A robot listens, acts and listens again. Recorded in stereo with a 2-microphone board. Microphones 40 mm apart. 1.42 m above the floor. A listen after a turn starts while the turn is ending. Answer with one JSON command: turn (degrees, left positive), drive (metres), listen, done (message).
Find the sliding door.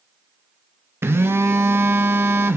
{"listen": true}
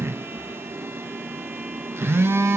{"listen": true}
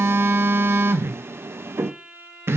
{"done": "I can't make out a sliding door, only a violin and a phone buzzing."}